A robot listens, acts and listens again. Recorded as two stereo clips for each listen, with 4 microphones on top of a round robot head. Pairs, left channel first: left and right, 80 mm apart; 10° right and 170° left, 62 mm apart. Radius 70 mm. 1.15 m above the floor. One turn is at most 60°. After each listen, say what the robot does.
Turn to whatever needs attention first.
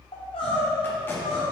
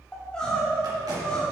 Turn 60° left.
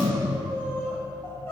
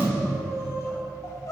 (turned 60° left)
Turn 20° left.
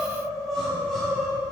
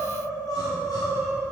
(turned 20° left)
Facing the crying, 1 to 2 m away.